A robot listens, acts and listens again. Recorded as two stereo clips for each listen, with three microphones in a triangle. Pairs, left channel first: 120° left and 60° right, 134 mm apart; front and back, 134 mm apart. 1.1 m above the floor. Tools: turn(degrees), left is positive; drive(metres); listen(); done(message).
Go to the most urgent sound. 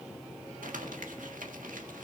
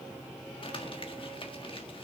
listen()
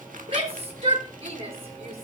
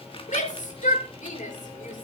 turn(degrees=-20)
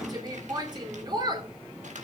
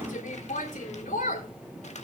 drive(metres=1.0)
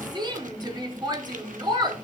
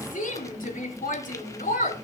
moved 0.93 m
drive(metres=1.0)
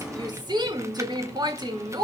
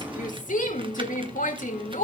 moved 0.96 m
drive(metres=1.0)
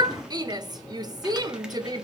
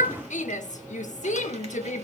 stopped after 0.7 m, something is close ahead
done("Arrived at the shout, straight ahead.")